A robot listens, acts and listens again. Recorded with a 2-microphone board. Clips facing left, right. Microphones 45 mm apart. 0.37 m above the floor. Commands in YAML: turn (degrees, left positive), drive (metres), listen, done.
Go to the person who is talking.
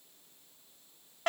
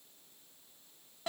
listen: true
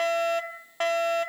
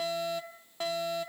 listen: true
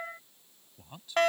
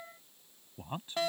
turn: -40
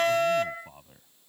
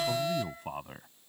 turn: -95
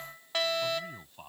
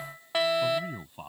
turn: -15
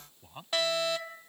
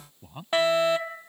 drive: 1.0
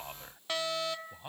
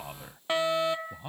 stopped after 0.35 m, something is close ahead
done: "Blocked. The man speaking is further on, straight ahead."